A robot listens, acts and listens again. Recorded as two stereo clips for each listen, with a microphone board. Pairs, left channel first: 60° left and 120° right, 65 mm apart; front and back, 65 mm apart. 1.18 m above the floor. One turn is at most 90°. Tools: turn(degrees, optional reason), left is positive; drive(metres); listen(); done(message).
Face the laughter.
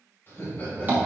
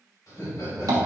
turn(degrees=10, reason="The laughter: 10° left.")
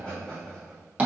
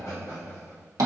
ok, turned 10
turn(degrees=-15, reason="The laughter is now 15° right.")
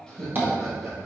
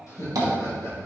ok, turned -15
turn(degrees=-30, reason="The laughter is now 30° right.")
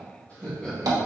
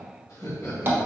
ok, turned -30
turn(degrees=-10, reason="The laughter is now 10° right.")
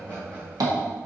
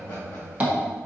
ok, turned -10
turn(degrees=-10, reason="The laughter is now 10° right.")
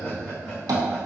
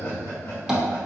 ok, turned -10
done("Facing the laughter, 1 to 2 m away.")